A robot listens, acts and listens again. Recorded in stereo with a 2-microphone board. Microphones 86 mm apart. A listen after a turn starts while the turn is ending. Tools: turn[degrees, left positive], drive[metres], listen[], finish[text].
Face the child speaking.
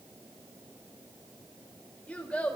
Action: turn[30]
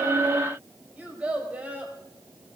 Thought: So it is at 20° right.
Action: turn[-20]
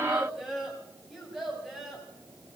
Action: finish[Found it: a child speaking, straight ahead.]